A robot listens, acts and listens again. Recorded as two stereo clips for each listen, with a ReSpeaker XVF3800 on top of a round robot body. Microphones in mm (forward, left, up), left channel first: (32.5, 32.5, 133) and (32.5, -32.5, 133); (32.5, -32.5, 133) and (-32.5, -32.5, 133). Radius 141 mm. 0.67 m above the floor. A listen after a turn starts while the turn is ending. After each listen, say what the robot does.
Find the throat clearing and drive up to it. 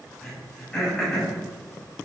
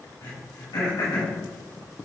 Turn 10° left.
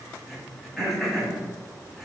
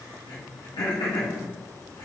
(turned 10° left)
Drive 1.0 m forward.
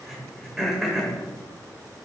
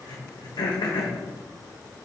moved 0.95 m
Drive 1.0 m forward.
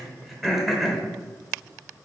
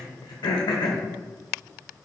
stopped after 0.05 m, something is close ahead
I am next to the throat clearing.